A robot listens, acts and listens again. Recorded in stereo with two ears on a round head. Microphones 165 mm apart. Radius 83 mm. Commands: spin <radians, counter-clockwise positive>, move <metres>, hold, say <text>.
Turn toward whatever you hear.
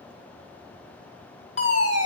spin 0.70
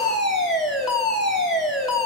say Facing the fire alarm.